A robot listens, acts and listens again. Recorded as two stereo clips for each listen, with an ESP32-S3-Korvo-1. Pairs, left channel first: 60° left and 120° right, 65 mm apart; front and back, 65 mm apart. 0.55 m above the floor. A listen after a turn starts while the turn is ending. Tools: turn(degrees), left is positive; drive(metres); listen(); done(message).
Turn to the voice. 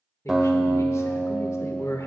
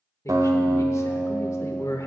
turn(degrees=30)
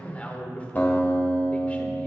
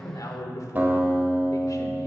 done("Facing the man speaking, 1 to 2 m away.")